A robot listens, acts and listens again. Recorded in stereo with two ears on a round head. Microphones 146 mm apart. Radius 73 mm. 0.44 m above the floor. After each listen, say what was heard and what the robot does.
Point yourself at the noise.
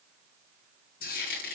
The frying: about 65° left or 115° left. Turn 65° left.
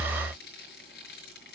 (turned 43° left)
So it is at 70° left. Turn 70° left.
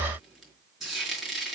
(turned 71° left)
Found it: frying, straight ahead.